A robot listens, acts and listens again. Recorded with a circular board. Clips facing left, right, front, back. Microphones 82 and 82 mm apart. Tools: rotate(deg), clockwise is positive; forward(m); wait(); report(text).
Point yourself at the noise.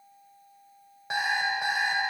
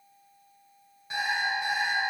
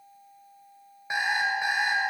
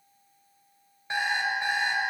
rotate(-80)
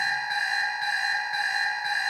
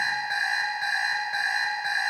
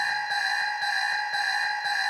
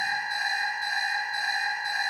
rotate(15)
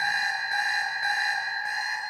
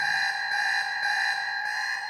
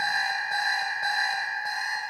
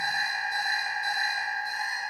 report("Facing the alarm clock.")